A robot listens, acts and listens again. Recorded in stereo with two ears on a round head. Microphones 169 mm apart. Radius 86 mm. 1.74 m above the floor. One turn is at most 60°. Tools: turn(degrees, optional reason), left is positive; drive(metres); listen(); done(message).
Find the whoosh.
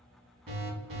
listen()
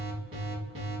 listen()
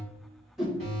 turn(degrees=30)
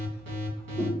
listen()
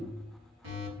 listen()
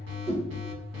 turn(degrees=-30, reason="So it is at 30° right.")
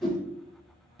done("Facing the whoosh.")